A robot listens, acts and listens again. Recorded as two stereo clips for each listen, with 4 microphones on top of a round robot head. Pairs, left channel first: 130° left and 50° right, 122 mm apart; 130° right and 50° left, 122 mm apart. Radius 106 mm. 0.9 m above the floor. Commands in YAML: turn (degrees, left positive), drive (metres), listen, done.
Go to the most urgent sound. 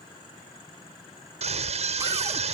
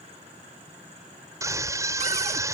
turn: -15
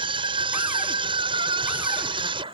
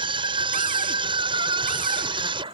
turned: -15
drive: 1.0
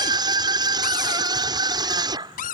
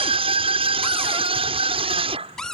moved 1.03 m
drive: 1.0
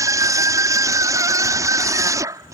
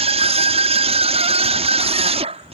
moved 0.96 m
turn: 15
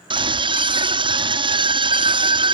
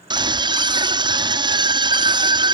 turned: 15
drive: 1.0
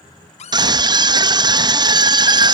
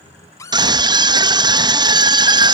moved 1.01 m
drive: 1.0
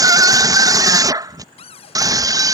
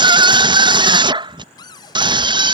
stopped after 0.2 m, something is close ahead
done: "I am next to the scream."